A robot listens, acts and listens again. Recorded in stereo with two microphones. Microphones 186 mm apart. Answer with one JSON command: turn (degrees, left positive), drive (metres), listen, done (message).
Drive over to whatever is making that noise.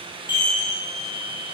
{"turn": -70}
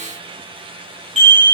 {"turn": -40}
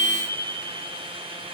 {"drive": 1.0}
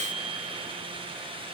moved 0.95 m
{"listen": true}
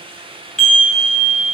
{"drive": 1.0}
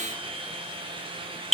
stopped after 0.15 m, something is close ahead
{"done": "I am next to the chime."}